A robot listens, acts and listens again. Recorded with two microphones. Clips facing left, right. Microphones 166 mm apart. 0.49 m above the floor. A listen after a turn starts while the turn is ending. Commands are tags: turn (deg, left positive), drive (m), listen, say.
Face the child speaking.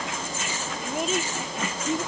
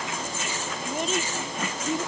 <turn deg="30"/>
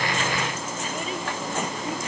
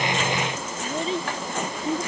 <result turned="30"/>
<turn deg="-30"/>
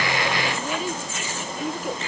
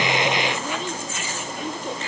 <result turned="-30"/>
<turn deg="10"/>
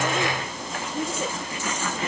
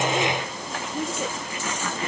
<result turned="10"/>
<say>Found it: a child speaking, straight ahead.</say>